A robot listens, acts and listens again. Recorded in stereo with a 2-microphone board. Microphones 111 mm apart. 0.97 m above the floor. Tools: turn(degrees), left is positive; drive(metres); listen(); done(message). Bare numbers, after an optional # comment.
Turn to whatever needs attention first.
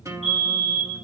turn(-90)
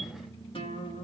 listen()
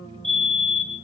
done("Found it: a fire alarm, straight ahead.")